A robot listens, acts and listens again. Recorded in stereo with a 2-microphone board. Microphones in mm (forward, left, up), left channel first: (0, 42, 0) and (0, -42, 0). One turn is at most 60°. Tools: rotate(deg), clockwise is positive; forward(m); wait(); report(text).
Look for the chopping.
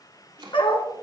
rotate(60)
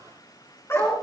wait()
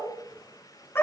wait()
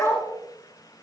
report("I heard chopping, but can't make it out now. It was about 10° right or 50° right.")